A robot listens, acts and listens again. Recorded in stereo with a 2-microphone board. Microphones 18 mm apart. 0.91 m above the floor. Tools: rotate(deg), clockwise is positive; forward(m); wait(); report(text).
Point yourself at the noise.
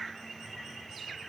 wait()
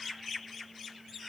wait()
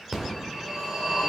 rotate(30)
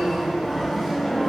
report("Found it: a phone ringing, straight ahead, 2 to 4 m away.")